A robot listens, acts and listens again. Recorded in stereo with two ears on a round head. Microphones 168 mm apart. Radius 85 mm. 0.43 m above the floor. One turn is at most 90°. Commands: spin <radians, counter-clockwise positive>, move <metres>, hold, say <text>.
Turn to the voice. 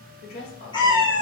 spin 1.05
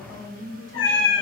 spin 0.44
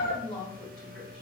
say Facing the woman speaking, 1 to 2 m away.